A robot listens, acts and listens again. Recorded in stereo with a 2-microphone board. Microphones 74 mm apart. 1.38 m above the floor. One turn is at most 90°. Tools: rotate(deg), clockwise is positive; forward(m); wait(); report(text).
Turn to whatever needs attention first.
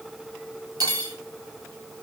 wait()
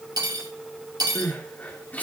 rotate(-20)
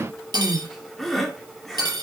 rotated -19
report("Facing the crying.")